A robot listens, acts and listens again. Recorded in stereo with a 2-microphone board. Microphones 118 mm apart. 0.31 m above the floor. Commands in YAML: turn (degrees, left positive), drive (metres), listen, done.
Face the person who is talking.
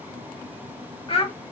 turn: 50
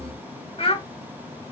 turn: 65
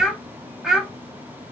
done: "Found it: a child speaking, straight ahead, under 1 m away."